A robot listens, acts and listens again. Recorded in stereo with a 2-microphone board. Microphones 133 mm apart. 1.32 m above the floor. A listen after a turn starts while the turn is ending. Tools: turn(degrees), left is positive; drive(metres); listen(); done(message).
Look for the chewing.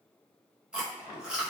turn(degrees=-30)
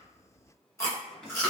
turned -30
turn(degrees=20)
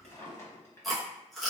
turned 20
done("Facing the chewing, under 1 m away.")